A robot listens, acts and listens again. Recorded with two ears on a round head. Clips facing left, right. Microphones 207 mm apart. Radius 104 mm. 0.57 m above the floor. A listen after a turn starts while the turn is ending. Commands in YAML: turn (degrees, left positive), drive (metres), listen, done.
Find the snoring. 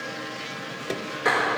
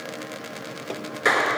listen: true
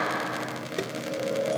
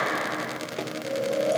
turn: -75
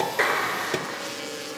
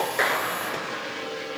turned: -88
listen: true
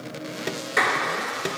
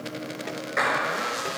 listen: true
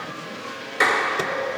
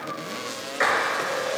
done: "I heard snoring, but can't make it out now. It was about 15° left or 15° right."